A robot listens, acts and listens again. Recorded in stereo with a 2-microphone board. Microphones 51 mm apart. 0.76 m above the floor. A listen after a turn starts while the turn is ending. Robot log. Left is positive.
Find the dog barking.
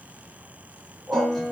note: The dog barking: about 30° right or 150° right.
cmd yaw -30
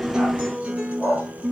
end: Facing the dog barking.